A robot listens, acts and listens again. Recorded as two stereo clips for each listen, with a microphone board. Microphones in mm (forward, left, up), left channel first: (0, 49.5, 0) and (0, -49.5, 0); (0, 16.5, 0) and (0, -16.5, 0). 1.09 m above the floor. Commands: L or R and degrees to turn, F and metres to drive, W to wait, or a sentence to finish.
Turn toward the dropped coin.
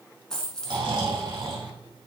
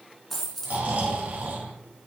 L30
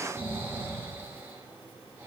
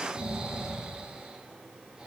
W
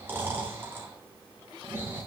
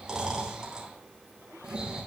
I heard a dropped coin, but can't make it out now. It was about 20° right or 140° left.